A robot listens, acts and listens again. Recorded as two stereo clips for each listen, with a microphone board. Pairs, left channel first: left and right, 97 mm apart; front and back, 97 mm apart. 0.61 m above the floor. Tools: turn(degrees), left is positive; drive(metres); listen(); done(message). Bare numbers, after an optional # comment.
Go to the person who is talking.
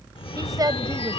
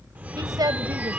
# The woman speaking: 135° right.
turn(-135)
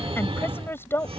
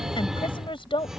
# The woman speaking is now 25° left.
turn(25)
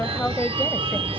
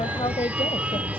# The woman speaking is now 15° left.
turn(15)
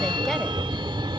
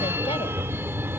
listen()
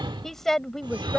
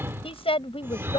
drive(1.0)
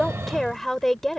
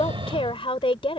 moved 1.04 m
drive(1.0)
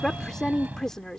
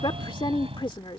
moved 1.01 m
drive(1.0)
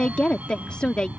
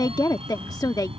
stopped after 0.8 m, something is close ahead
# The woman speaking is now 15° left.
turn(15)
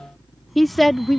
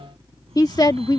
done("Arrived at the woman speaking, straight ahead.")